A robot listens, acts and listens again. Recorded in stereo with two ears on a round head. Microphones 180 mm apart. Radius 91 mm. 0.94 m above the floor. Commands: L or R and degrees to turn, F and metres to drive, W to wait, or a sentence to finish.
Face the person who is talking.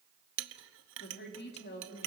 L55
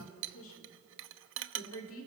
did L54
L70
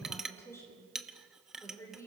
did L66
L15
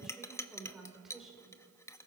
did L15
Facing the woman speaking, over 4 m away.